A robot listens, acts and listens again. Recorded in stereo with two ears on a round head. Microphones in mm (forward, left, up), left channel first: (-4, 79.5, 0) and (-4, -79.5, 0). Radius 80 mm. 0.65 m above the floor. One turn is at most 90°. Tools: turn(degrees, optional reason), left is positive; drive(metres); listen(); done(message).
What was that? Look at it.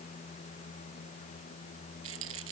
turn(degrees=-90)
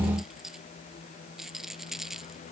done("Facing the rattle.")